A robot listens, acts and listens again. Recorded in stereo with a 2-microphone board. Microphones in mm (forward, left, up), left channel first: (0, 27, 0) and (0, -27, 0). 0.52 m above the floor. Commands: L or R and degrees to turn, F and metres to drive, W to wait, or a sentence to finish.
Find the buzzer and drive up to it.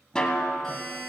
L30
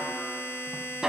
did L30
L145
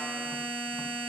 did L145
L10
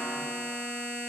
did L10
F1.0
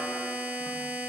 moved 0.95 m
F1.0
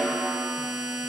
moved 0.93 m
R10
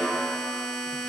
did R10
F1.0
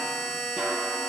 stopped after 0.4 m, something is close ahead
I am next to the buzzer.